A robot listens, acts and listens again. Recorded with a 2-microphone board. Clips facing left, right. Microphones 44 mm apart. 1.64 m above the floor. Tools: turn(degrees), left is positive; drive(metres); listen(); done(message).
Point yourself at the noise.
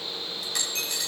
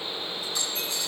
turn(degrees=65)
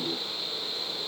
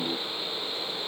listen()
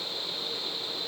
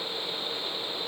done("I heard a dropped coin, but can't make it out now. It was about straight ahead or 50° left.")